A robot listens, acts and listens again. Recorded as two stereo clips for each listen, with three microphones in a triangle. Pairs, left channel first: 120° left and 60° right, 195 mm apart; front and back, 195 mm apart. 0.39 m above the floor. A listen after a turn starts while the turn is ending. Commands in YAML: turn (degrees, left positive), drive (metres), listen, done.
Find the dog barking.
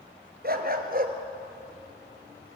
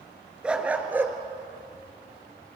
turn: -100
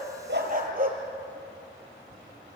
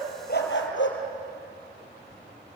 turn: -15
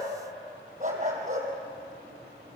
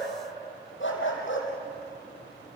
turn: -10
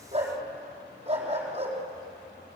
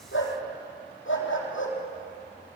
done: "Found it: a dog barking, straight ahead."